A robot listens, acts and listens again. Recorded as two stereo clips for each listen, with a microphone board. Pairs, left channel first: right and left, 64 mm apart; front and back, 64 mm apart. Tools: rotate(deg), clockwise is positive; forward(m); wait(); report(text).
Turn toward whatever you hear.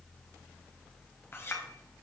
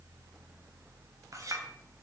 rotate(145)
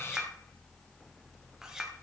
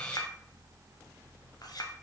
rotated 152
rotate(-10)
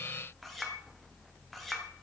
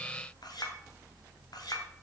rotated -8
report("Found it: a clink, straight ahead.")